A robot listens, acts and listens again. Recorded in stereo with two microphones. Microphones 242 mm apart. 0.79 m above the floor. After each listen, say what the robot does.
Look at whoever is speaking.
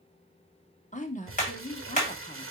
Turn 30° left.
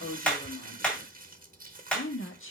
Turn 120° left.
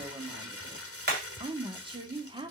Turn 20° right.
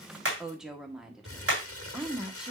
Facing the woman speaking.